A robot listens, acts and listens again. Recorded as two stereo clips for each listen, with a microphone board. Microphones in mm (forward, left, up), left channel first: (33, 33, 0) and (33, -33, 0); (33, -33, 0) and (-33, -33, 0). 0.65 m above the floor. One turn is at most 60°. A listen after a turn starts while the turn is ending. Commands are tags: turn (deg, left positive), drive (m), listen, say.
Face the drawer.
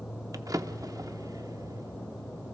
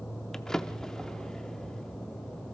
<turn deg="-60"/>
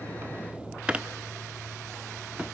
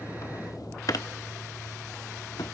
<turn deg="-20"/>
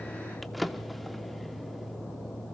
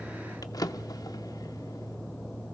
<say>Facing the drawer, under 1 m away.</say>